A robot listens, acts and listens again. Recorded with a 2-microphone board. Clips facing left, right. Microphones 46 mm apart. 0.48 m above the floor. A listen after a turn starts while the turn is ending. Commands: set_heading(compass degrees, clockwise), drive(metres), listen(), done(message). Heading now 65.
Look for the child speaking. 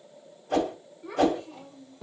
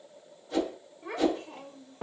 set_heading(125)
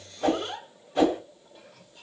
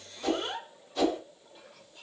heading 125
set_heading(145)
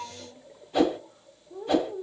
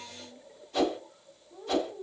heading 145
set_heading(100)
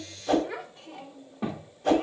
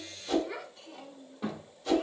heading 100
set_heading(75)
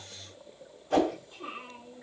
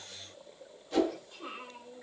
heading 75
done("Facing the child speaking, 1 to 2 m away.")